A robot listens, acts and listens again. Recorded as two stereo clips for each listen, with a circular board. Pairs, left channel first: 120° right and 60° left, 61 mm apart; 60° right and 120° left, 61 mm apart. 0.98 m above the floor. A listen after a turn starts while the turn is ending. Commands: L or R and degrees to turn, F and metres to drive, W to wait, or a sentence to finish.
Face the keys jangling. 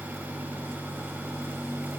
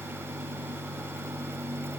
W
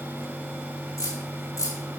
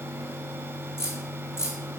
R100
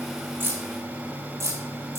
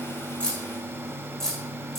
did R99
L25
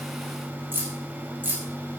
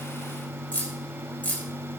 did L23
Facing the keys jangling.